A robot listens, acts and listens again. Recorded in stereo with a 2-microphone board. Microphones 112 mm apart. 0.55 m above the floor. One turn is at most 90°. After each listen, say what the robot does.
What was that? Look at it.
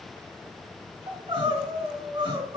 Turn 50° right.
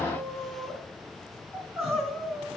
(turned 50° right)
Facing the crying.